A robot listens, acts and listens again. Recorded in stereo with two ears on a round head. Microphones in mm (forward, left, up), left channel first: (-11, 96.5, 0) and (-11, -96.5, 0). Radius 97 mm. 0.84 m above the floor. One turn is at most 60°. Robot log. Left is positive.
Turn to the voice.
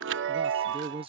note: The man speaking: about 25° right or 155° right.
cmd yaw -25
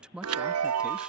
end: Facing the man speaking.